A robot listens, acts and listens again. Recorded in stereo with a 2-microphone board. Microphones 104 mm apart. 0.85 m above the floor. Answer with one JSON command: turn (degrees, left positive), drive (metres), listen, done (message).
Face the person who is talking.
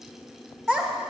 {"turn": 30}
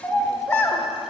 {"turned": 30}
{"turn": 150}
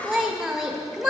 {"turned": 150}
{"turn": -15}
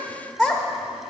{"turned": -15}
{"done": "Facing the child speaking."}